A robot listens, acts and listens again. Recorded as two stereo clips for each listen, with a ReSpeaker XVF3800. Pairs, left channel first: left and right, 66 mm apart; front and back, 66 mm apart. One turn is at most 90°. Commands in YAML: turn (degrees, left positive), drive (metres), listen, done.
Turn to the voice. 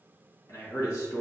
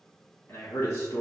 turn: 45
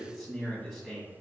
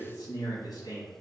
done: "Facing the man speaking, 1 to 2 m away."